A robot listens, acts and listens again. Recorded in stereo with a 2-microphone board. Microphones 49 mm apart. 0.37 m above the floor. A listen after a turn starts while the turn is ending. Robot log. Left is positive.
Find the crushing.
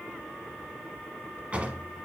cmd idle
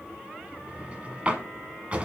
cmd idle
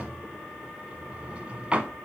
end: I can't make out crushing, only a drawer.